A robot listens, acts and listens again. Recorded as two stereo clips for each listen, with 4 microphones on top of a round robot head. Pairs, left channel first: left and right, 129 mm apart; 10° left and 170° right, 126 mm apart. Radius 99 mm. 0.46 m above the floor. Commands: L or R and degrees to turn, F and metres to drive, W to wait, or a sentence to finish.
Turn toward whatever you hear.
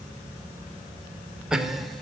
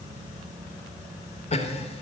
Facing the laughter.